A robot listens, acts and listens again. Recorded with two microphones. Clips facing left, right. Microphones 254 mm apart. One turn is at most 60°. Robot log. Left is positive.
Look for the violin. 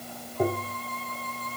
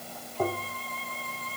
note: The violin: about 50° left or 130° left.
cmd yaw +50
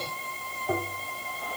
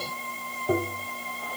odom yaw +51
end: Facing the violin.